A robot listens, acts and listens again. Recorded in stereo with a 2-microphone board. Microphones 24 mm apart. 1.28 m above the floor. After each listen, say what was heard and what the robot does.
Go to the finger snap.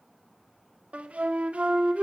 Keep listening.
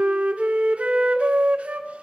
Keep listening.
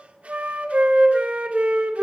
I can't make out a finger snap to turn to.